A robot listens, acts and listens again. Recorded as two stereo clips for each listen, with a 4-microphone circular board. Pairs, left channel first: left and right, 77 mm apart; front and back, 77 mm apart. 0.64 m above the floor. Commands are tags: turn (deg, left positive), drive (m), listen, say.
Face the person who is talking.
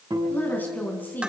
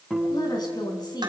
<turn deg="25"/>
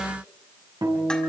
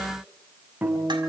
<listen/>
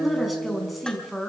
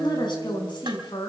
<say>Facing the woman speaking, over 4 m away.</say>